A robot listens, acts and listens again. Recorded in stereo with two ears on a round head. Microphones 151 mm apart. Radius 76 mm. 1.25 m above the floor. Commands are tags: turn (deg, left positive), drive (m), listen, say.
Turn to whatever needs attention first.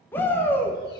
<turn deg="30"/>
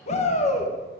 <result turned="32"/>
<turn deg="135"/>
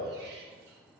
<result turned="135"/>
<listen/>
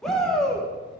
<say>Found it: a shout, straight ahead.</say>